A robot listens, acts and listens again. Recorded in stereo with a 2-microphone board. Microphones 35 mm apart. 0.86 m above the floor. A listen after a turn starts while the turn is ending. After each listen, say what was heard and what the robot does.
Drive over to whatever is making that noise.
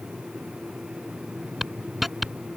Turn 30° left.
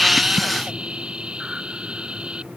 So it is at 35° right. Turn 35° right.
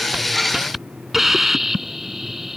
The hiss is now 10° right. Turn 10° right.
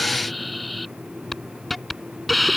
Drive 1.0 m forward.
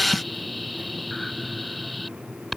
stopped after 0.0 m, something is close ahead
Something is in my way. I am facing the hiss but have not reached it.